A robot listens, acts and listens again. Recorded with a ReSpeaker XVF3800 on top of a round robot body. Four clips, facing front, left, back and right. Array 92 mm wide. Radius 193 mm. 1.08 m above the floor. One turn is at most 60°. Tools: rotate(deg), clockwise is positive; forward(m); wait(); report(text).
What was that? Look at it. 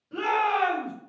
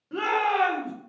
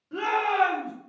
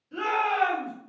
rotate(-60)
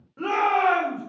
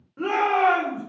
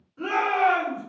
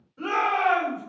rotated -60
rotate(-50)
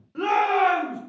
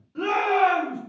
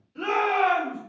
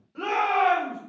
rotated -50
report("Found it: a shout, straight ahead.")